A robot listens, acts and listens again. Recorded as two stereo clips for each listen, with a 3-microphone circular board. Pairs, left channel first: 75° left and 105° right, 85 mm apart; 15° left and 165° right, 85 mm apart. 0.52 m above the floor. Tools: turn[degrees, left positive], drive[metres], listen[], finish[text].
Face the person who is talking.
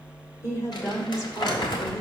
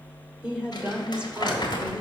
Thought: The woman speaking: 120° left.
Action: turn[120]
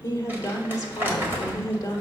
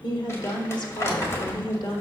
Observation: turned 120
Thought: The woman speaking is now 30° left.
Action: turn[30]
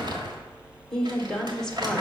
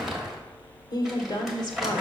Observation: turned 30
Thought: The woman speaking is now 10° right.
Action: turn[-10]
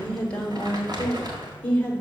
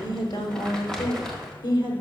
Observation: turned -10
Action: finish[Facing the woman speaking.]